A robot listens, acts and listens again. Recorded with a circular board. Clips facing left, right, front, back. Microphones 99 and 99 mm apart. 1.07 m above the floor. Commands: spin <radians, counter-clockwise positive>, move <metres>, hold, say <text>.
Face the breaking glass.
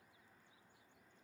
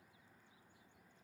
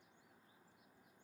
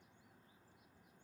hold
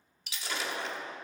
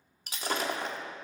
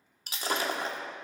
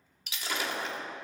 spin -0.87
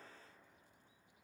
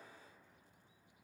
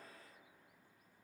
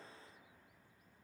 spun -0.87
say Facing where the breaking glass came from. I can't hear it now.